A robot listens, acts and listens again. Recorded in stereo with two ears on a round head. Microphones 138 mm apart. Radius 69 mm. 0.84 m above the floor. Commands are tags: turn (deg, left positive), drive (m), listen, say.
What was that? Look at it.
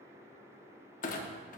<turn deg="50"/>
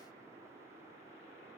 <listen/>
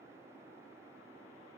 <say>I heard a clunk, but can't make it out now. It was about straight ahead or 80° left.</say>